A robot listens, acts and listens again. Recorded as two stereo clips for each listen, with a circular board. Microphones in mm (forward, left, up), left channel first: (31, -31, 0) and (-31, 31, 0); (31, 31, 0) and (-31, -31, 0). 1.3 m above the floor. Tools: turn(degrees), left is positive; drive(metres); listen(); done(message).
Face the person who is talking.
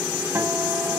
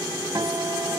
listen()
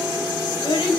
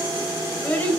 turn(degrees=-30)
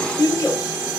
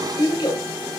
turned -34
done("Found it: a child speaking, straight ahead, over 4 m away.")